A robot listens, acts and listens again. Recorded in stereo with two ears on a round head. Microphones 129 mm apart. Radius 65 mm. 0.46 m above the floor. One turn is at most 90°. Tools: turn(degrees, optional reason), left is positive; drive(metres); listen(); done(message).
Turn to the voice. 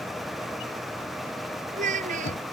turn(degrees=-60, reason="The child speaking: about 60° right or 120° right.")
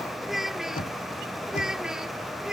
done("Facing the child speaking.")